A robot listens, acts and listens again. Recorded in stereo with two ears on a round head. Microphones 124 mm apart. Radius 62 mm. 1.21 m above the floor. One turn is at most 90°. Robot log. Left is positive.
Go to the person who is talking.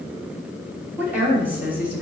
cmd yaw -30
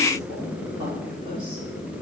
note: So it is at 140° right.
cmd yaw -90
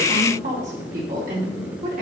note: The woman speaking is now 60° right.
cmd yaw -60
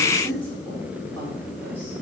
note: The woman speaking is now 15° left.
cmd yaw +15
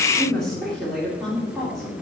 cmd fwd 1.0
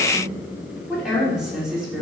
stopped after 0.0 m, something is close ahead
end: Blocked. The woman speaking is further on, straight ahead.